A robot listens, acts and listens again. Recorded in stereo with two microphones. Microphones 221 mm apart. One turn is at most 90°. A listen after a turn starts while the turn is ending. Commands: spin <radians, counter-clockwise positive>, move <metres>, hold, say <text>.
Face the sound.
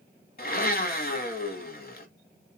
spin 0.79
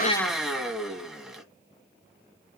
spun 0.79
say Facing the blender.